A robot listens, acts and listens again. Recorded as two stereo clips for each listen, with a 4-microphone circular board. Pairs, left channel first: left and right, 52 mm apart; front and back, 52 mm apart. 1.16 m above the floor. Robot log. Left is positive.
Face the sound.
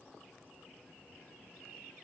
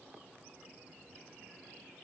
cmd idle
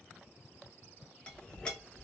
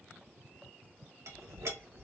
note: The clink: 160° left.
cmd yaw +160
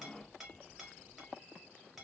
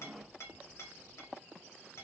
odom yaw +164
end: Found it: a clink, straight ahead.